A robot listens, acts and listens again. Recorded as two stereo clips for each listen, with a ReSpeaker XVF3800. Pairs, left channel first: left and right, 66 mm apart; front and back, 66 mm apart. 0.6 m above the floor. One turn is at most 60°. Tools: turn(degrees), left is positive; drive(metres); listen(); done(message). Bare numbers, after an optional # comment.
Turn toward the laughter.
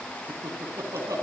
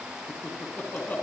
# The laughter: 60° right.
turn(-60)
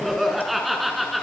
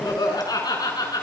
done("Found it: laughter, straight ahead, over 4 m away.")